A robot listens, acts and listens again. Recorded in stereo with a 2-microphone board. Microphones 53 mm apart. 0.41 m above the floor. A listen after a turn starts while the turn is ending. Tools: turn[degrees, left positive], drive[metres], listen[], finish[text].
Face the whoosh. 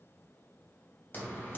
Action: listen[]
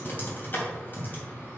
Action: listen[]
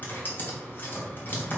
Action: finish[I can't make out a whoosh to turn to.]